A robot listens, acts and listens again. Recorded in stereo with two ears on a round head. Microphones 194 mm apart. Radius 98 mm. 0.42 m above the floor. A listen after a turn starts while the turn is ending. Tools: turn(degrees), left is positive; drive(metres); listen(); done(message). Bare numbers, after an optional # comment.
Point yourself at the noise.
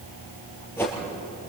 turn(30)
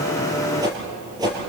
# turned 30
# So it is at 20° right.
turn(-20)
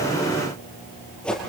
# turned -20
done("Facing the whoosh, over 4 m away.")